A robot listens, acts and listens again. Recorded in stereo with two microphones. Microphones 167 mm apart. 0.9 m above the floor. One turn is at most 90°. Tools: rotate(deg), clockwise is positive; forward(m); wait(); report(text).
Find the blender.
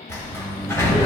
wait()
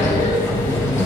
wait()
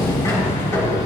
report("I can't make out a blender to turn to.")